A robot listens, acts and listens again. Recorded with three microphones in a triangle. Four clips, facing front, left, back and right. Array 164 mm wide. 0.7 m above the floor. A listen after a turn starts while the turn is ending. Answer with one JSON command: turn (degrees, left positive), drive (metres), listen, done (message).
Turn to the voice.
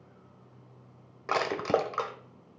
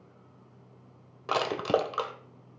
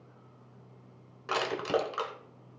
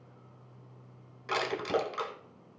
{"listen": true}
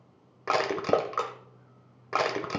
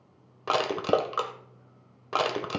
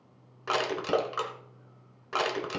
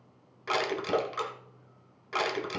{"listen": true}
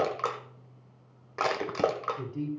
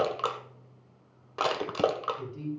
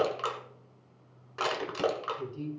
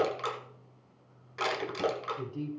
{"turn": -40}
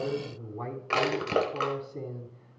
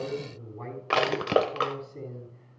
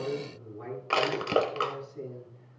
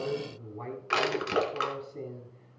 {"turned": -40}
{"done": "Facing the man speaking, over 4 m away."}